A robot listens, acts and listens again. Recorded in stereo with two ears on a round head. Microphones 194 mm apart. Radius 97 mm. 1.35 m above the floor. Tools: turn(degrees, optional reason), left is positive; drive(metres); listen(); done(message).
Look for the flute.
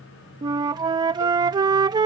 turn(degrees=-20, reason="The flute: about 20° right or 160° right.")
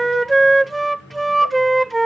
done("Facing the flute.")